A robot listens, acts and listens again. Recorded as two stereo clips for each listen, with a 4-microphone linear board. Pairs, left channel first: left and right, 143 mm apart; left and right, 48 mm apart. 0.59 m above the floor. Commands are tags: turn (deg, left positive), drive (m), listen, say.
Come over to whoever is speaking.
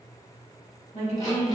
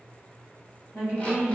<turn deg="50"/>
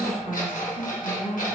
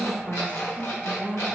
<turn deg="65"/>
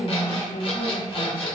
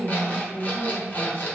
<turn deg="10"/>
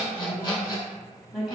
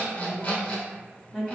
<drive m="1.0"/>
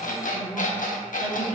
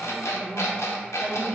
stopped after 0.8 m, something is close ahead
<say>Arrived at the woman speaking, straight ahead.</say>